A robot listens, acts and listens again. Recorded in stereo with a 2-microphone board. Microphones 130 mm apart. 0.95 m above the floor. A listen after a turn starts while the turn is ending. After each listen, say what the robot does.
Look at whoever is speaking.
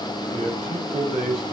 Turn 75° right.
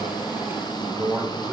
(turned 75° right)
Turn 20° right.
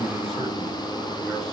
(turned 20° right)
Keep listening.
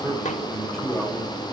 Found it: a man speaking, straight ahead, over 4 m away.